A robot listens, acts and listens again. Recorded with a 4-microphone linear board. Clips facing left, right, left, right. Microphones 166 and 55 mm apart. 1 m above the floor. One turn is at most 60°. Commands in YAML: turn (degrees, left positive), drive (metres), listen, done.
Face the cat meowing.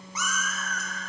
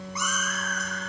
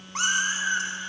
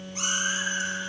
turn: 60
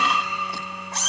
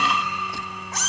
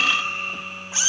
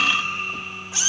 turn: 30
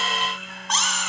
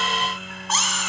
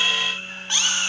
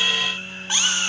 done: "Found it: a cat meowing, straight ahead."